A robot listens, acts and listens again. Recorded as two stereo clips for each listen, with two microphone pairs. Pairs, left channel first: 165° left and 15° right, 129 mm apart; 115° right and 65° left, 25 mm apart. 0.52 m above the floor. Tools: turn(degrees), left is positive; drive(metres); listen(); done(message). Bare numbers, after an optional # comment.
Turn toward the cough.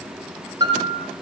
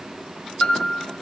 listen()
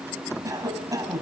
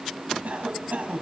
# The cough: 50° left.
turn(50)
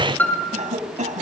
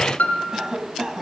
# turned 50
done("Facing the cough.")